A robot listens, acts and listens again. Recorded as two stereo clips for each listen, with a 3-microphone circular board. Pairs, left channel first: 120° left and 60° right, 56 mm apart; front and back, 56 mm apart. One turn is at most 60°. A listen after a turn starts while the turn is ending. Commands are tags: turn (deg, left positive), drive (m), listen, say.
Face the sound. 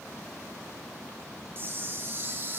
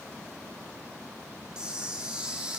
<turn deg="-60"/>
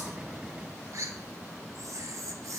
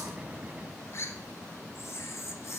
<turn deg="-40"/>
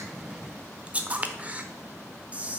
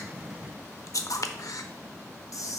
<say>Found it: a camera shutter, straight ahead.</say>